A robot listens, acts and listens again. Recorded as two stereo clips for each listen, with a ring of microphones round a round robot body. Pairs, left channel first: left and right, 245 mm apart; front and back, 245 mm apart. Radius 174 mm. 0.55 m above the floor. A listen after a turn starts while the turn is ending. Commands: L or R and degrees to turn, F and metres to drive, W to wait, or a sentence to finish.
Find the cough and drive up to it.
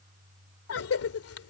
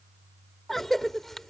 L90
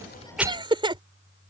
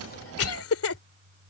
R20
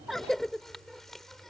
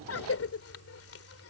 F1.0
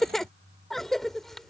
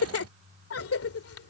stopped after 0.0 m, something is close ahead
Something is in my way. I am facing the cough but have not reached it.